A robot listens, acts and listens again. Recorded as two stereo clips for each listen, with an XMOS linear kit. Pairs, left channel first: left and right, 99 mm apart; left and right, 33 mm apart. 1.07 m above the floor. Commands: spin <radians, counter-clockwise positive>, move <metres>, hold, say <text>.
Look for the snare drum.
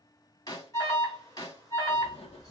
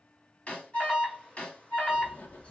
spin 0.70
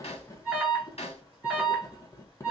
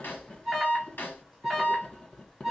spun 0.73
spin 1.66
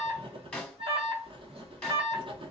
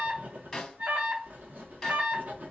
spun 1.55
spin 0.17
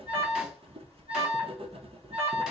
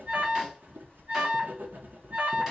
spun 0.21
hold
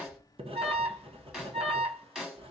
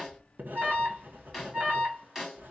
say Facing the snare drum.